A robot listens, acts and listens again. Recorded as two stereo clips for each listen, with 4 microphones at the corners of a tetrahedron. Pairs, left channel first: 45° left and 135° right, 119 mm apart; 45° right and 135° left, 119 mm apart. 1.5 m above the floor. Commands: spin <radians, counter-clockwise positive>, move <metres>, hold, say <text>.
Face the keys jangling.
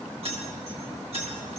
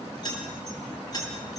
spin -1.83
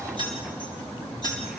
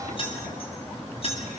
say Found it: keys jangling, straight ahead, over 4 m away.